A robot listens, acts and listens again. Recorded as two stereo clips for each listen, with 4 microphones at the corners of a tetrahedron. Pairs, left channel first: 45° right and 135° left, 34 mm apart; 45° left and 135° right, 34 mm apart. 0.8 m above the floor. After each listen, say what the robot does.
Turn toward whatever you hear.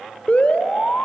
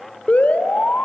Found it: an alarm, straight ahead.